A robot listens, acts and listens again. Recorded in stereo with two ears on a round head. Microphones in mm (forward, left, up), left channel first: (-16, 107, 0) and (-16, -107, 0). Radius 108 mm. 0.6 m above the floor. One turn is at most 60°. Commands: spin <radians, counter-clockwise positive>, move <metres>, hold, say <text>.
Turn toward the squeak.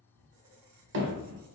spin -1.05
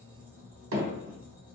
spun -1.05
spin -0.17
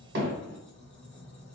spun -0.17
say Facing the squeak, under 1 m away.